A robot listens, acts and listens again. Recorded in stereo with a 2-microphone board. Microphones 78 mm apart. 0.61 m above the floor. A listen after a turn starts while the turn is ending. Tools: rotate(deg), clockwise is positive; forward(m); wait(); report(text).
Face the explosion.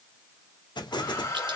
rotate(-70)
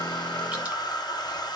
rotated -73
wait()
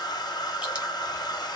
report("I heard an explosion, but can't make it out now. It was about 5° right or 40° left.")